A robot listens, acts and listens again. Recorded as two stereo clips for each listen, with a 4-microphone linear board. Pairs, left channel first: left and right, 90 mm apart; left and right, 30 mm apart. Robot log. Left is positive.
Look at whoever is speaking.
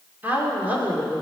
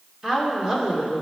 note: The woman speaking: about 20° right or 160° right.
cmd yaw -20
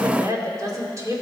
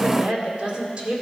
note: So it is at 145° right.
cmd yaw -145
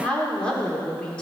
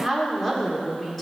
note: The woman speaking is now 10° left.
cmd yaw +10
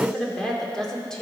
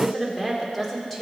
end: Facing the woman speaking, 2 to 4 m away.